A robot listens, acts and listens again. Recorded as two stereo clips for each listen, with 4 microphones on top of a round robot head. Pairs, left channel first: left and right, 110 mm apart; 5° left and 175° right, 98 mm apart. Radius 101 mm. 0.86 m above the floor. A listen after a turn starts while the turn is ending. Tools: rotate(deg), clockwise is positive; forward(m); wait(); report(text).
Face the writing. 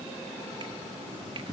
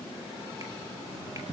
rotate(155)
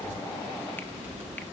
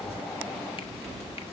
rotate(15)
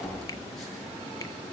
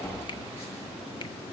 report("Found it: writing, straight ahead.")